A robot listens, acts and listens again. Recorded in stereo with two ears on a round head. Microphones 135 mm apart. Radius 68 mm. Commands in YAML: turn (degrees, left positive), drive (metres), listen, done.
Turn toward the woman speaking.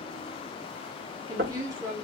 turn: -20
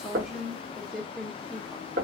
done: "Facing the woman speaking, 1 to 2 m away."